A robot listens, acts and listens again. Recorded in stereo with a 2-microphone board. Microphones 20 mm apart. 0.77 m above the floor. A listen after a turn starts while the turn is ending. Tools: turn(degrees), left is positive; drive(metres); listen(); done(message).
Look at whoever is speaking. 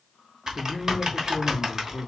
turn(degrees=-30)
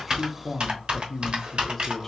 turn(degrees=15)
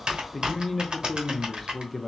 done("Facing the man speaking.")